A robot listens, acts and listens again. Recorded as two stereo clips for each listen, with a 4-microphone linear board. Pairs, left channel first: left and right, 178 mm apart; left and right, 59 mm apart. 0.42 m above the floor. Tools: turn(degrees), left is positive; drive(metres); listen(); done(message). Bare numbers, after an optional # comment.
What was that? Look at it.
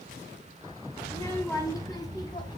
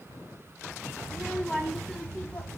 # The child speaking: about 25° left or 155° left.
turn(25)
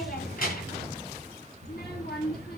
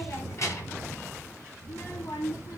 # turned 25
# So it is at 115° left.
turn(115)
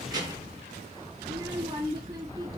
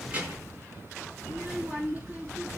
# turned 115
# The child speaking is now 25° right.
turn(-25)
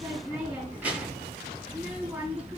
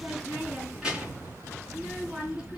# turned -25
# The child speaking is now 10° right.
turn(-10)
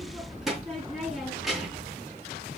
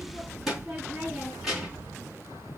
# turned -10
done("Facing the child speaking, 2 to 4 m away.")